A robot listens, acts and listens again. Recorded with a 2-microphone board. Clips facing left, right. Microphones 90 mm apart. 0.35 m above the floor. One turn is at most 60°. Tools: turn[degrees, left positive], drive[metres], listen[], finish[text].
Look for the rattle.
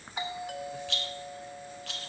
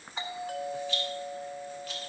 Action: turn[60]
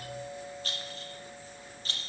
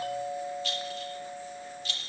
Thought: So it is at 40° left.
Action: turn[40]
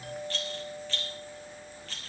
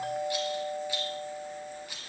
Thought: The rattle is now 15° right.
Action: turn[-15]
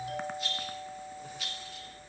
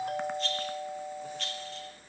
Action: finish[Facing the rattle.]